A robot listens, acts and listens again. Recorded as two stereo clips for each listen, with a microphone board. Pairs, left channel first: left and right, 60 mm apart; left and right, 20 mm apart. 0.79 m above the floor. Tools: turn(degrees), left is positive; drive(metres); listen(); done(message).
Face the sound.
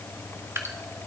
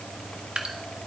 turn(degrees=-50)
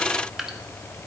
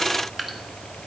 turn(degrees=-10)
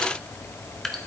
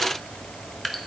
done("Facing the dripping.")